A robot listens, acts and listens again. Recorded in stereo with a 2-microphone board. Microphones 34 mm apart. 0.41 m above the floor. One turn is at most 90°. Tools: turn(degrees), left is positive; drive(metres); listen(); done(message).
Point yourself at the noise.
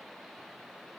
listen()
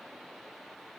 listen()
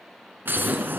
turn(degrees=-90)
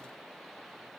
done("Facing where the explosion came from. I can't hear it now.")